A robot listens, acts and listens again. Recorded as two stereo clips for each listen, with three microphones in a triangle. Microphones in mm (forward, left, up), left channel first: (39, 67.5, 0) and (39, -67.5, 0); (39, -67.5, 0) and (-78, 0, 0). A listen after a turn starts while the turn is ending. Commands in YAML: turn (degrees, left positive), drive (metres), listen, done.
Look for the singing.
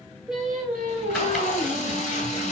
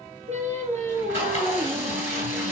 turn: 165
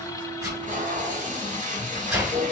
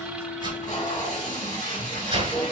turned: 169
listen: true
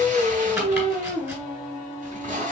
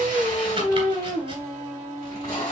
turn: -90
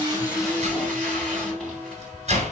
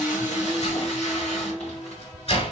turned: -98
done: "Facing the singing, 2 to 4 m away."